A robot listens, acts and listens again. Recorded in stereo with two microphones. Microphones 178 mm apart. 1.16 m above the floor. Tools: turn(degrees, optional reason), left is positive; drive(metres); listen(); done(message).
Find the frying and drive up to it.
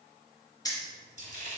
turn(degrees=-50, reason="The frying: about 50° right or 130° right.")
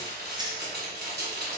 turn(degrees=-75, reason="So it is at 75° right.")
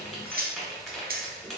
drive(metres=1.0)
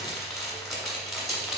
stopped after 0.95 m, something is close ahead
done("I am next to the frying.")